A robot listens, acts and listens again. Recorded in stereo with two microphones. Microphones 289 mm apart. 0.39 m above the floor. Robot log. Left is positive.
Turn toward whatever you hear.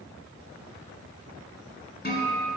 note: The guitar: about 35° left or 145° left.
cmd yaw +35
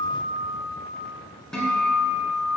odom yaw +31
end: Facing the guitar, 1 to 2 m away.